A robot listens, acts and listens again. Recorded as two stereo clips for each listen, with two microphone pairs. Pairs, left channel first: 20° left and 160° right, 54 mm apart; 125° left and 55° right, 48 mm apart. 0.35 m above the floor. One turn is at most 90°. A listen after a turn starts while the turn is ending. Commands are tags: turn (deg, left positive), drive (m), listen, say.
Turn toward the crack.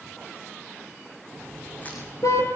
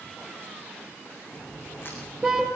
<turn deg="85"/>
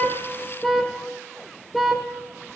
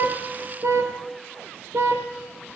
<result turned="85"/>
<say>Facing where the crack came from. I can't hear it now.</say>